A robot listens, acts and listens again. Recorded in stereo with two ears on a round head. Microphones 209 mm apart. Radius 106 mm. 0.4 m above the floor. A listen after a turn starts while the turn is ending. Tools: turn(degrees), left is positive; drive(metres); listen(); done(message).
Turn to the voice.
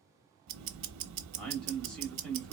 turn(degrees=30)
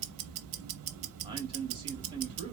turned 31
turn(degrees=-25)
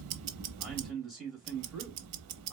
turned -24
done("Facing the man speaking.")